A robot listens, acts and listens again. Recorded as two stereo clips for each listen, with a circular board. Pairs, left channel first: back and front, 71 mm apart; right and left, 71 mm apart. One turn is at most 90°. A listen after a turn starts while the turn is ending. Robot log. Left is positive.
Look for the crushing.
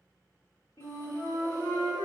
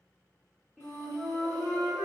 cmd idle
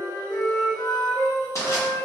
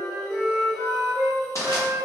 note: The crushing: 135° right.
cmd yaw -90
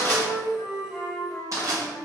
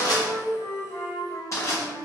note: The crushing is now 45° right.
cmd yaw -45
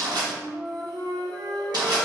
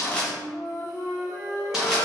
note: The crushing is now 10° left.
cmd yaw +10
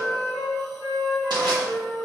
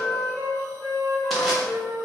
cmd idle
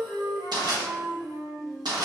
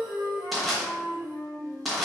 end: Found it: crushing, straight ahead.